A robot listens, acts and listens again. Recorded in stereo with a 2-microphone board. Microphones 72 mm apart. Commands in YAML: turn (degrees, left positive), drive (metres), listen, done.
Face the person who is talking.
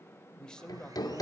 turn: 30
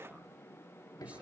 listen: true
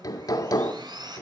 listen: true
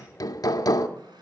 done: "I heard a man speaking, but can't make it out now. It was about 20° right or 140° left."